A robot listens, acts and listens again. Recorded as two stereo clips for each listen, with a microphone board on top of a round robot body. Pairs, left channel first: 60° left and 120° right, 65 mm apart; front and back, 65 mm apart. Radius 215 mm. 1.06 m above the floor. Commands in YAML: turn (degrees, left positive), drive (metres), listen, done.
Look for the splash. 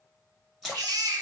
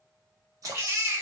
turn: 150
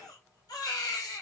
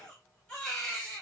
done: "Facing where the splash came from. I can't hear it now."